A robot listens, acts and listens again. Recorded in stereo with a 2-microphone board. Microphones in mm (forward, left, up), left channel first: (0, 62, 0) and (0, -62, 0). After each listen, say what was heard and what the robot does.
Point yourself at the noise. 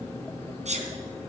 The sneeze: about 65° right or 115° right. Turn 65° right.
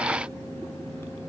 Keep listening.
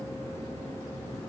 I heard a sneeze, but can't make it out now. It was about straight ahead or 50° right.